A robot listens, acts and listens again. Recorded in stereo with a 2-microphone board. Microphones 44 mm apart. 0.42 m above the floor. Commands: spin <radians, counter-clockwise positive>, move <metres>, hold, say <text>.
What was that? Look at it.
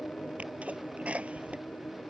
spin -0.52
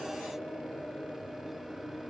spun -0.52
hold
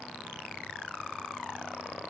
say I heard a sneeze, but can't make it out now. It was about straight ahead or 120° right.